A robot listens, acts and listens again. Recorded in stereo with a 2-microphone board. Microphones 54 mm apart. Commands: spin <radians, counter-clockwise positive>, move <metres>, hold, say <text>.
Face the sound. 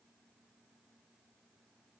hold
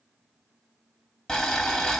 spin 0.52
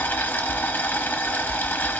spin 2.53
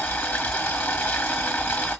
spin 0.61
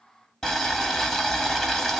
spin 0.17
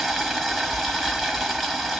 say Found it: boiling, straight ahead.